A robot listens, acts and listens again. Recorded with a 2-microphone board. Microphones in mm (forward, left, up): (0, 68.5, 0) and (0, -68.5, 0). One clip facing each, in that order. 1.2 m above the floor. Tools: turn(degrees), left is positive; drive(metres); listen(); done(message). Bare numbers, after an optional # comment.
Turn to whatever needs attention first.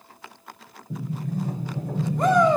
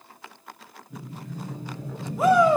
turn(-30)
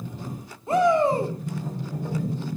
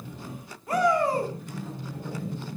# So it is at 25° left.
turn(25)
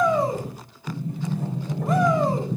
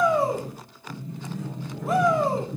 done("Found it: a shout, straight ahead.")